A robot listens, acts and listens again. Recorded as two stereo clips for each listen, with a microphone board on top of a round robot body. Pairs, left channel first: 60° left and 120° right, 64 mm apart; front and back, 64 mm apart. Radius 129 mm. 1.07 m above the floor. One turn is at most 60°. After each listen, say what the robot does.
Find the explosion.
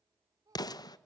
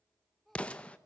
Turn 60° left.
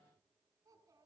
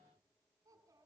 Turn 10° left.
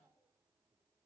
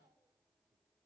Facing where the explosion came from. I can't hear it now.